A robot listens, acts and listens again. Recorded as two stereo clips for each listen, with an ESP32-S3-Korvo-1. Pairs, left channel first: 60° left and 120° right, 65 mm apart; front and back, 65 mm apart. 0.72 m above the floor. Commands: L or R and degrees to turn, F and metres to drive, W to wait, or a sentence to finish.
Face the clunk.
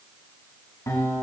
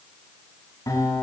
W
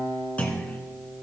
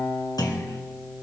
R10
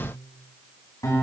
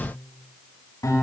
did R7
Facing where the clunk came from. I can't hear it now.